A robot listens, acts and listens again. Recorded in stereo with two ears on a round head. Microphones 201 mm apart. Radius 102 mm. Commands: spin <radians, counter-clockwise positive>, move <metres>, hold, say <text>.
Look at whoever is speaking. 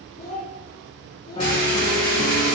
spin 0.79
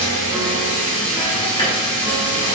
hold
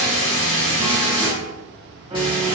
hold
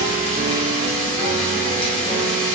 say I heard a child speaking, but can't make it out now. It was about straight ahead or 90° left.